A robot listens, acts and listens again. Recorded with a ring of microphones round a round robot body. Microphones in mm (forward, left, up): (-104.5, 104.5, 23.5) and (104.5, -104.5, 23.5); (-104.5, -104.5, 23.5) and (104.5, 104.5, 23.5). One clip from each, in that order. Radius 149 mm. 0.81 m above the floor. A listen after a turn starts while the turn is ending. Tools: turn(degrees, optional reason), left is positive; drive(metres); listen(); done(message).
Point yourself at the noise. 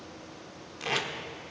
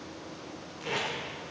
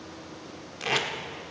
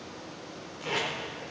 turn(degrees=180, reason="The tape being pulled: straight behind.")
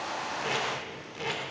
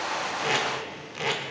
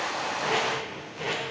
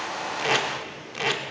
turn(degrees=30, reason="The tape being pulled is now 30° left.")
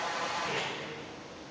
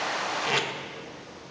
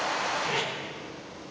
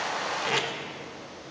turn(degrees=-15, reason="The tape being pulled is now 15° right.")
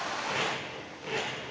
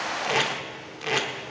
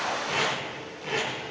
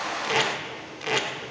done("Found it: tape being pulled, straight ahead, 1 to 2 m away.")